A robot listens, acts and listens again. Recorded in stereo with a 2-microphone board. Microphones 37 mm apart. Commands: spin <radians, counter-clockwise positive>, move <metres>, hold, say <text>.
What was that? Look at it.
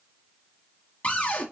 spin 0.61
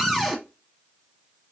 say Facing the cupboard door.